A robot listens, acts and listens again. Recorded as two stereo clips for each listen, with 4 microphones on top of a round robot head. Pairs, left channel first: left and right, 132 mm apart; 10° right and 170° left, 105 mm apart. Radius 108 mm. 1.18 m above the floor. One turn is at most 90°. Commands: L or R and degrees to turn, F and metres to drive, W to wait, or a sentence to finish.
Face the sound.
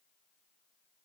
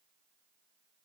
W
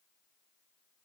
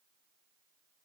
W
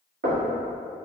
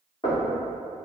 R75
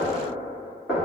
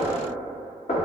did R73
Found it: knocking, straight ahead, 1 to 2 m away.